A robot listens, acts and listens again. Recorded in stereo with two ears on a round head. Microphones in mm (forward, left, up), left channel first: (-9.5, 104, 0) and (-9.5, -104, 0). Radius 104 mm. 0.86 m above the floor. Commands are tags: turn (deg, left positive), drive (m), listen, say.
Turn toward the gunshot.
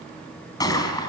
<turn deg="15"/>
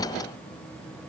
<listen/>
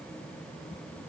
<say>I heard a gunshot, but can't make it out now. It was about straight ahead or 150° left.</say>